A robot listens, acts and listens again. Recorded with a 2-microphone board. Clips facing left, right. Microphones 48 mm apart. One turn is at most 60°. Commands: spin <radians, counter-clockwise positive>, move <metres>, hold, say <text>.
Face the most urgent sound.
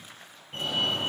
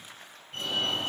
spin 0.52
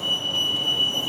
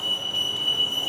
spin 1.05
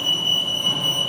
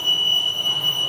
spin 1.05
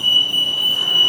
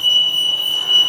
say Facing the fire alarm, over 4 m away.